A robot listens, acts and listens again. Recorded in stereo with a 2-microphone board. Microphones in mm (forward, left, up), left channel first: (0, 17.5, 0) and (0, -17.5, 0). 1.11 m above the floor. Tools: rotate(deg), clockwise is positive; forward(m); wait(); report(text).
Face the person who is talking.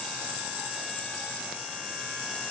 wait()
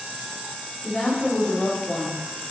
rotate(-40)
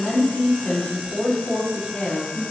rotate(-100)
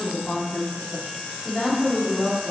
rotate(-45)
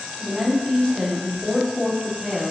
report("Facing the woman speaking, 2 to 4 m away.")